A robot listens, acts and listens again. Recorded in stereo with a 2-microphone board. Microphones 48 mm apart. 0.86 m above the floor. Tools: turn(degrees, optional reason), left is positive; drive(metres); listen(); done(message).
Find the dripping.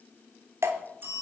turn(degrees=-90)
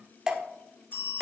turn(degrees=-10, reason="So it is at 10° right.")
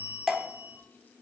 done("Found it: dripping, straight ahead, under 1 m away.")